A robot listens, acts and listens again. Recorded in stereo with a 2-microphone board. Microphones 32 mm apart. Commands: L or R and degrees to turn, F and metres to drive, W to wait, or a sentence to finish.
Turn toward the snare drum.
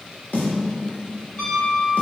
L75
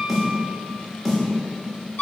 Found it: a snare drum, straight ahead.